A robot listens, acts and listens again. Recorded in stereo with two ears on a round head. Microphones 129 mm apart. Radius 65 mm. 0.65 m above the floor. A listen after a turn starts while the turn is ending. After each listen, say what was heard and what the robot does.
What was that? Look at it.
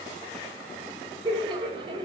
The laughter: about 35° right or 145° right. Turn 35° right.
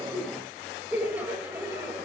So it is at 15° right. Turn 15° right.
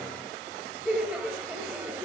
The laughter is now 10° right. Turn 10° right.
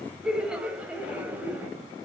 The laughter is now 10° right. Turn 10° right.
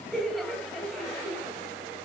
Found it: laughter, straight ahead.